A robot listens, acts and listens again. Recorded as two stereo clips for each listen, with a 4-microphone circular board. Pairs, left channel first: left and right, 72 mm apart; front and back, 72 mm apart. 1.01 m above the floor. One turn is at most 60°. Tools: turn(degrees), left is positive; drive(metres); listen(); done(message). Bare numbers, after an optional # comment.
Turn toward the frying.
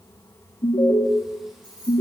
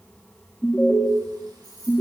listen()
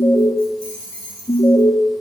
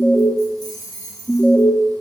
listen()
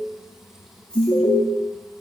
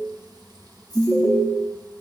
done("I can't make out frying to turn to.")